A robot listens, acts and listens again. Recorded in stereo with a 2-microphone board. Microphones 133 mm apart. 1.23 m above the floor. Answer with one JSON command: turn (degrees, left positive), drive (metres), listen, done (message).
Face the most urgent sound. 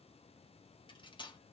{"listen": true}
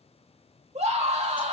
{"turn": -55}
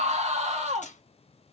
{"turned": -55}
{"turn": -65}
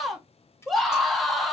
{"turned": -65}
{"done": "Facing the scream."}